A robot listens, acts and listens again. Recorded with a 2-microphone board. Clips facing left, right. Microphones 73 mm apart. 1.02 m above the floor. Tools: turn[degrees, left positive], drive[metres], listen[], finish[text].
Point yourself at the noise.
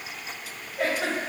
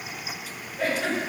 Thought: The giggle: about 65° left or 115° left.
Action: turn[65]
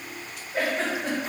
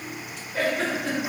Thought: So it is at 30° left.
Action: turn[30]
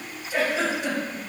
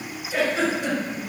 Action: finish[Found it: a giggle, straight ahead, 1 to 2 m away.]